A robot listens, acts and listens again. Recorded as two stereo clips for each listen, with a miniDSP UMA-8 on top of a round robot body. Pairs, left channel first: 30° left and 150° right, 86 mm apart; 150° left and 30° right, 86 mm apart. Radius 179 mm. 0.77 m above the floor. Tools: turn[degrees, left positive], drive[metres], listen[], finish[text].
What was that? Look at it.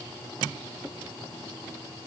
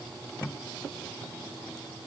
Action: listen[]
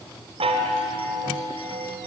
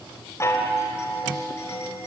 Thought: The chime: 150° right.
Action: turn[-150]
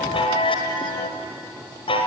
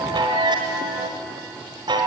Action: finish[Found it: a chime, straight ahead.]